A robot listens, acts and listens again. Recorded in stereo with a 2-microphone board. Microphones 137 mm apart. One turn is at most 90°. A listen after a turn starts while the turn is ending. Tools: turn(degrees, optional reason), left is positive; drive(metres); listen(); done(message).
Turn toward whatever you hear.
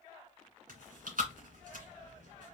turn(degrees=-90)
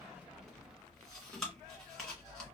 done("Found it: chewing, straight ahead, 1 to 2 m away.")